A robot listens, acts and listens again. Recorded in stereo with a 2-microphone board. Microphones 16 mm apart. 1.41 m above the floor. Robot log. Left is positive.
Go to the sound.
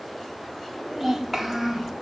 cmd yaw -30
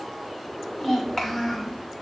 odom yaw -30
note: So it is at 25° left.
cmd yaw +25
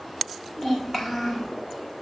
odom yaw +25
note: The child speaking is now 25° left.
cmd yaw +25
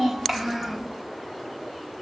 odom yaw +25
cmd fwd 1.0
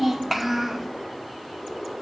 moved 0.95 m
cmd fwd 1.0
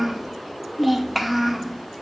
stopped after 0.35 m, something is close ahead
end: I am next to the child speaking.